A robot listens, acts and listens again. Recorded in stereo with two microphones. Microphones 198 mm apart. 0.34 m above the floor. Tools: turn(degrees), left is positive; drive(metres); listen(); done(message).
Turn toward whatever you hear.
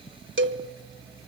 turn(degrees=-65)
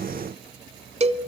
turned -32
turn(degrees=-30)
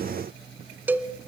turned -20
turn(degrees=-10)
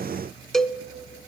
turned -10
done("Facing the cowbell.")